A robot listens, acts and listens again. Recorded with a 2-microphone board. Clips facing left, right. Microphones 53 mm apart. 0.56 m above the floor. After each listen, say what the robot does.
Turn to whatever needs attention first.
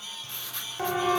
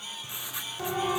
Turn 30° left.
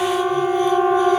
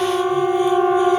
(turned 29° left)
Found it: a siren, straight ahead.